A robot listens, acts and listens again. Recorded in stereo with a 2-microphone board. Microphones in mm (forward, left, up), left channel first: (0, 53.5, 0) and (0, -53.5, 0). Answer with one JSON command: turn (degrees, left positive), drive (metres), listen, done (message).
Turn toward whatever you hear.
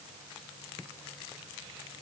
{"listen": true}
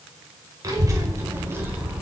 {"turn": -30}
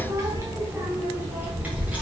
{"turn": -30}
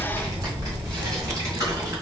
{"turn": -150}
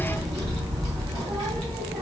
{"turn": -45}
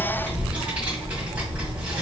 {"turn": -15}
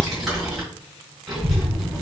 {"done": "Facing the child speaking, 2 to 4 m away."}